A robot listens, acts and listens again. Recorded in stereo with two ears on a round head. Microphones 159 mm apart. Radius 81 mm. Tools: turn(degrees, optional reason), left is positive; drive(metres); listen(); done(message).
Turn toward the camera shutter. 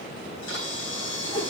turn(degrees=90)
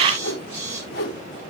turn(degrees=-10, reason="So it is at 10° right.")
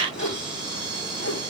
done("Found it: a camera shutter, straight ahead.")